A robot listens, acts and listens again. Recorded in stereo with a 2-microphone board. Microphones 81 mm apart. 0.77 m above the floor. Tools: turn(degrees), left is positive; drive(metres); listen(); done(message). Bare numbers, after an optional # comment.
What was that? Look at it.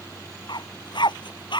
turn(90)
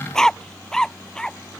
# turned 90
# So it is at 10° left.
turn(10)
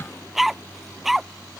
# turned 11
done("Facing the dog barking.")